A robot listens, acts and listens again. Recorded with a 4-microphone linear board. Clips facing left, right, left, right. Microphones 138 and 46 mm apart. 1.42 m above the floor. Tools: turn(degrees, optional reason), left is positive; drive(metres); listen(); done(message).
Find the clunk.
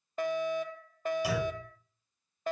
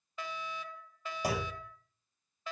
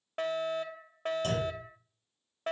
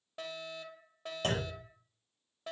turn(degrees=-40, reason="The clunk: about 40° right or 140° right.")
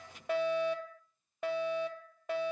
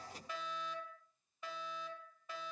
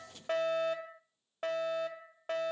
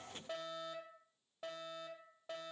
listen()
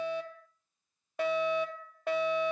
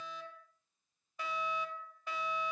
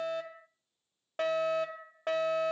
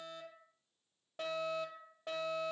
done("I heard a clunk, but can't make it out now. It was about straight ahead or 100° right.")